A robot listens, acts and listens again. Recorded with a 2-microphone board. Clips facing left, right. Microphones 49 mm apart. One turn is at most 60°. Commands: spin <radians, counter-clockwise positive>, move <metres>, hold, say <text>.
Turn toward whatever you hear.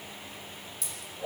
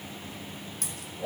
spin -0.96
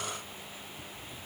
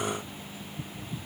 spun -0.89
hold
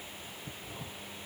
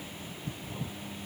say I heard a dropped coin, but can't make it out now. It was about 5° right or 75° right.